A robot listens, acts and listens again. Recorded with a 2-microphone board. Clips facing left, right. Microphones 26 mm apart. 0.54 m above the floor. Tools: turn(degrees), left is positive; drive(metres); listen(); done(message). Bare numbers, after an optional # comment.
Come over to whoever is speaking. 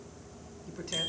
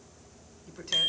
turn(-30)
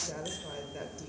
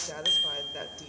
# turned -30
# So it is at 145° right.
turn(-145)
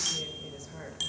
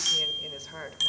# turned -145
# The woman speaking is now 60° right.
turn(-60)
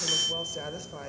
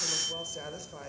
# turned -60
# The woman speaking is now 15° left.
turn(15)
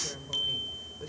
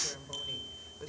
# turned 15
drive(1.0)
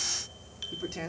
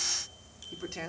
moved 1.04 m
drive(1.0)
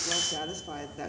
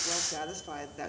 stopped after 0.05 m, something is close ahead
done("I am next to the woman speaking.")